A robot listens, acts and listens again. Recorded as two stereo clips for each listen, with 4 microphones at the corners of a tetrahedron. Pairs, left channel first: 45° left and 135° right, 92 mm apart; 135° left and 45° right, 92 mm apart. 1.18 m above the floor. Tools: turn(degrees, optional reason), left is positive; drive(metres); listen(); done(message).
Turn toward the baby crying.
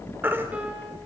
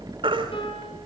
turn(degrees=-70, reason="The baby crying: 70° right.")
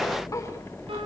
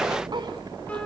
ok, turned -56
turn(degrees=-10, reason="Nothing new. It was at 10° right.")
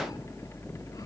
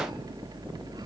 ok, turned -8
listen()
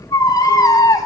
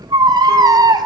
done("Facing the baby crying, 2 to 4 m away.")